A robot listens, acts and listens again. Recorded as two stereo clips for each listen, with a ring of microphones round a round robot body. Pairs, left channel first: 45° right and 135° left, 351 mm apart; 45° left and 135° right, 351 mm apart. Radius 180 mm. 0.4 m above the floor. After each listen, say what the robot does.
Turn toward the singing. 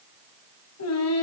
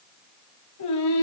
Facing the singing.